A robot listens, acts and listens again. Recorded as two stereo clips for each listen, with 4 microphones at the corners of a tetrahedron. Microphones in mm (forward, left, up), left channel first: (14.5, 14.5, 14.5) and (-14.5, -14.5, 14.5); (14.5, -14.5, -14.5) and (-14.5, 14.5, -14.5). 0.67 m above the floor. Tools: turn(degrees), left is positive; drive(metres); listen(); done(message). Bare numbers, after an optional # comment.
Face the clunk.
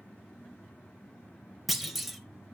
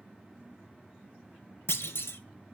# The clunk: 45° right.
turn(-45)
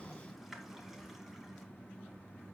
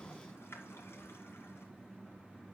done("Facing where the clunk came from. I can't hear it now.")